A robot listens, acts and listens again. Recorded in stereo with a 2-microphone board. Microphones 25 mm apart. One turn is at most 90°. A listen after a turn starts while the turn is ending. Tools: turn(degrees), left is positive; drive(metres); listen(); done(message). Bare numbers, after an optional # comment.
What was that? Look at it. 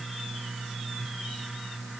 listen()
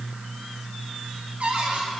turn(-90)
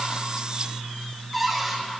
done("Found it: a cupboard door, straight ahead, over 4 m away.")